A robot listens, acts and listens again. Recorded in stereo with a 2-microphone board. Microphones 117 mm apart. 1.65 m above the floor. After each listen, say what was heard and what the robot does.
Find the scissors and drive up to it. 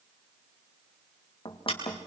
The scissors: about 50° left or 130° left. Turn 50° left.
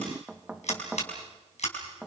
So it is at 80° left. Turn 80° left.
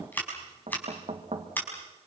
The scissors is now 15° left. Turn 15° left.
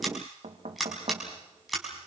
Drive 1.0 m forward.
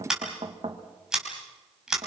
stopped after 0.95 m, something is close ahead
Something is in my way. I am facing the scissors but have not reached it.